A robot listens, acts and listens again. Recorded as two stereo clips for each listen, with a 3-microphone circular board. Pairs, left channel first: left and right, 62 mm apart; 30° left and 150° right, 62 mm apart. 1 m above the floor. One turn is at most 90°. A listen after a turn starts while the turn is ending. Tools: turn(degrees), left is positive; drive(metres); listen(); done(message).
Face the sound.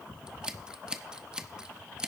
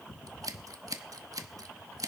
turn(degrees=-90)
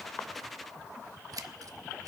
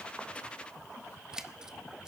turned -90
turn(degrees=-70)
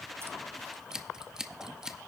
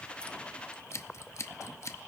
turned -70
turn(degrees=-10)
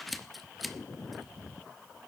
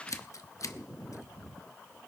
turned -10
done("Facing the scissors.")